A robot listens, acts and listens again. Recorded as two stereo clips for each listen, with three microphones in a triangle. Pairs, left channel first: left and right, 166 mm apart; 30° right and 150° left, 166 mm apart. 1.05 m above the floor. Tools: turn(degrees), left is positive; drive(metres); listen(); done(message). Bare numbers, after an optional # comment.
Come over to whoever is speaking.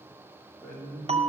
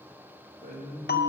# The man speaking: 175° left.
turn(175)
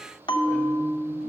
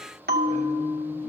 listen()
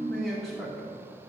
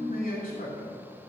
drive(1.0)
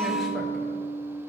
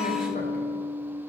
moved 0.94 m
listen()
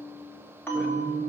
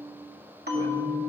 listen()
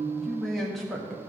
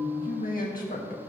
drive(1.0)
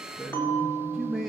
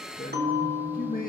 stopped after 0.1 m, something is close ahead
done("I am next to the man speaking.")